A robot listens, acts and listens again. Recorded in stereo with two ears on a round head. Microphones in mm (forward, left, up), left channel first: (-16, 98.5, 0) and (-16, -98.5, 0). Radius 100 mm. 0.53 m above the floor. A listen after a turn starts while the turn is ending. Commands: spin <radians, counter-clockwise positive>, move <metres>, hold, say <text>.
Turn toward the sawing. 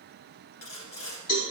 spin 1.57
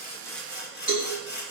say Found it: sawing, straight ahead.